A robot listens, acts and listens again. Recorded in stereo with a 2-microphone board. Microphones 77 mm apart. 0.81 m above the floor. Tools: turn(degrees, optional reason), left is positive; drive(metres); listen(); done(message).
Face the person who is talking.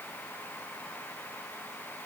listen()
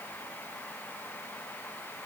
listen()
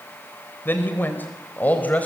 turn(degrees=20, reason="The man speaking: about 20° left or 160° left.")
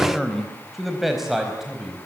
done("Facing the man speaking.")